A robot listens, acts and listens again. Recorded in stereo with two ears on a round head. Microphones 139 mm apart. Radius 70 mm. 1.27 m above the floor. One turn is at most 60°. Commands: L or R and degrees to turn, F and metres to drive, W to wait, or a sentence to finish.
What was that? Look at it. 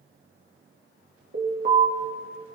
R55
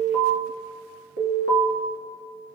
R60
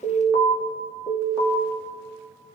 R15
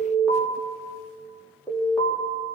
Found it: an alarm, straight ahead, 2 to 4 m away.